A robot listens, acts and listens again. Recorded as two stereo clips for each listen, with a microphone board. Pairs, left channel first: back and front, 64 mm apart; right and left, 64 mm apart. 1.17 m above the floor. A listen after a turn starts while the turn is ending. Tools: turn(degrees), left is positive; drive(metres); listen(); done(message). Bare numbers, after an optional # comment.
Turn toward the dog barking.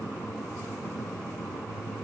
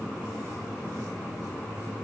listen()
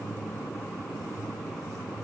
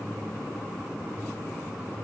listen()
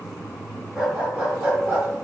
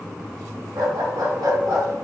# The dog barking: 70° left.
turn(70)
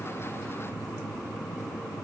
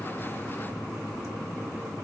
listen()
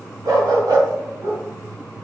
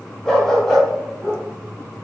# The dog barking is now 10° right.
turn(-10)
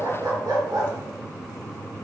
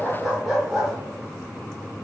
done("Facing the dog barking, 2 to 4 m away.")